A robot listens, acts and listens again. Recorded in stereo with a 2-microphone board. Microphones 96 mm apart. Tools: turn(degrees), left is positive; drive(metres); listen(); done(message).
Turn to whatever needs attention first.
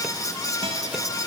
listen()
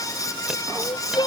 turn(degrees=50)
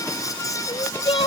turn(degrees=80)
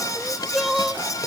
done("Facing the crying.")